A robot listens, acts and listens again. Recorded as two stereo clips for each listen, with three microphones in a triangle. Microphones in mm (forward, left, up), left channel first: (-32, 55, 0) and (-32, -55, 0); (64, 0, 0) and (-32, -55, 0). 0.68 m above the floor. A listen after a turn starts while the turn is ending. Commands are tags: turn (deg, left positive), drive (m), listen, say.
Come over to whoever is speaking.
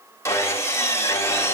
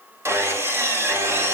<listen/>
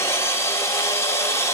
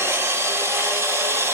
<listen/>
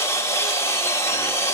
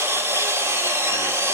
<say>I can't make out anyone speaking to turn to.</say>